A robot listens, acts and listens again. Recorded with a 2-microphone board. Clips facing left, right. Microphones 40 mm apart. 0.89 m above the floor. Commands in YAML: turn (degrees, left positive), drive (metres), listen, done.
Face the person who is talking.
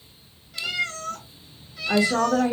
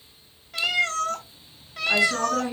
turn: 35
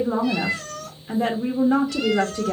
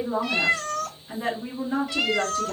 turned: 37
turn: 105
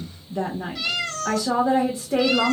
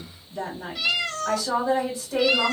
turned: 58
turn: 50
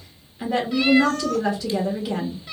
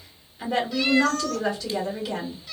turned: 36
turn: 15
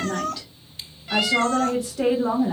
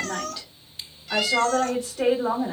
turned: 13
done: "Found it: a woman speaking, straight ahead."